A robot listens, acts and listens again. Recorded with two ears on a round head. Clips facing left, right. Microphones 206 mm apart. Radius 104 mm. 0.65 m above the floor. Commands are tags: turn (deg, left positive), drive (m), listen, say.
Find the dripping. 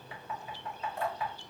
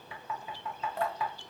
<turn deg="-50"/>
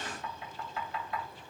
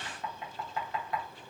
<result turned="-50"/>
<listen/>
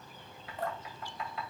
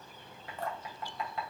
<turn deg="-80"/>
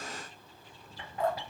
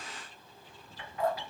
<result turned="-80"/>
<say>Facing the dripping, under 1 m away.</say>